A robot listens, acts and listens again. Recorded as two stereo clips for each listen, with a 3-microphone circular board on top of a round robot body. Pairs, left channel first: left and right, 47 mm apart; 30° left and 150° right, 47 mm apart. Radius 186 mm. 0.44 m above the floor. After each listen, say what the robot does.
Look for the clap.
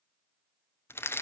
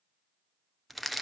Keep listening.
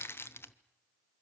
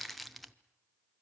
Keep listening.
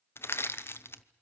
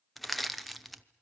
I can't make out a clap to turn to.